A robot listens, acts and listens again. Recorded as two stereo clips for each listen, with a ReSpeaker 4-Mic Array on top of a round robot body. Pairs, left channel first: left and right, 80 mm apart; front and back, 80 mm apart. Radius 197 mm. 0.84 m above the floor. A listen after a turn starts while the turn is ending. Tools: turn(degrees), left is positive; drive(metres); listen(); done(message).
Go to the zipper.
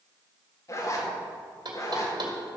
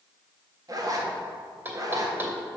turn(degrees=140)
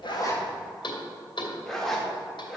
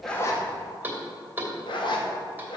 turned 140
drive(metres=1.0)
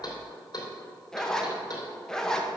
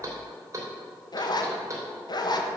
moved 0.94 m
turn(degrees=10)
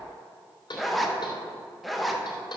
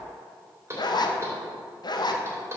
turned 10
drive(metres=1.0)
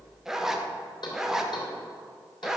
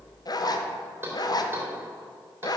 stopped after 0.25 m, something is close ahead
done("I am next to the zipper.")